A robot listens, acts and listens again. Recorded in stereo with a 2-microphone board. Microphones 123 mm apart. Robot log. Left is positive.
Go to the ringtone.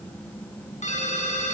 cmd yaw +90
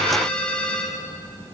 note: So it is at 10° left.
cmd yaw +10
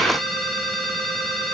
cmd fwd 1.0
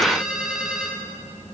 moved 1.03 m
cmd fwd 1.0
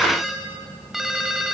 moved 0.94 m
cmd fwd 1.0
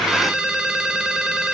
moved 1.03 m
cmd fwd 1.0
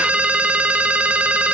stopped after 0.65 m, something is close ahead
note: The ringtone is now 10° right.
cmd yaw -10
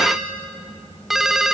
end: I am next to the ringtone.